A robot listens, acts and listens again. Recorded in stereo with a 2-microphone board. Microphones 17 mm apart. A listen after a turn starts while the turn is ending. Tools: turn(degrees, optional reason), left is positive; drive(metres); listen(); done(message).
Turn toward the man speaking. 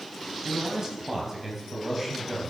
turn(degrees=-20, reason="The man speaking: about 20° right or 160° right.")
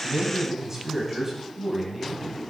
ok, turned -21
turn(degrees=-20, reason="The man speaking: about 20° right or 160° right.")
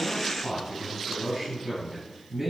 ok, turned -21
turn(degrees=-25, reason="The man speaking: about 25° right or 155° right.")
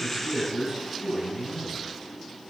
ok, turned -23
turn(degrees=-130, reason="So it is at 130° right.")
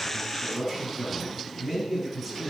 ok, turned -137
done("Found it: a man speaking, straight ahead.")